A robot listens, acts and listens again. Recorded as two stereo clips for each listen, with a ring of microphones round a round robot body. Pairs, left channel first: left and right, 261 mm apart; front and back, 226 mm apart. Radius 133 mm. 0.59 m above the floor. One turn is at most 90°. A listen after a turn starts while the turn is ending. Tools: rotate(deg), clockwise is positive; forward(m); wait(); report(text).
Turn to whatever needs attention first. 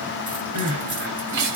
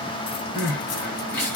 rotate(80)
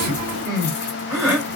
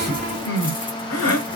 report("Found it: crying, straight ahead, 2 to 4 m away.")